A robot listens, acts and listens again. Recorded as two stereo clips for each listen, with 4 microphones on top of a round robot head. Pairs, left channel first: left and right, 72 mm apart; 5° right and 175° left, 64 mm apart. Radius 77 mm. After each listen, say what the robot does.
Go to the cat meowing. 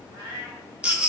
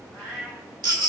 Turn 70° right.
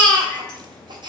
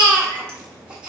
Keep listening.
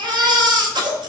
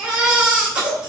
Keep listening.
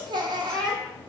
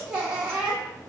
Facing where the cat meowing came from. I can't hear it now. I did not reach it.